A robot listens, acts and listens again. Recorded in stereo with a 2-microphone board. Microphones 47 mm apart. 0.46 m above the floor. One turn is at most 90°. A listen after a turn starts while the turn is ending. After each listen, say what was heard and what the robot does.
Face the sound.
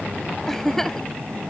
Turn 30° left.
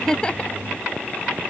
Keep listening.
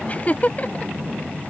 So it is at 145° left. Turn 90° left.
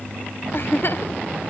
The giggle is now 55° left. Turn 55° left.
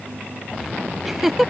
The giggle is now 10° right. Turn 10° right.
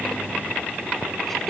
Found it: a giggle, straight ahead.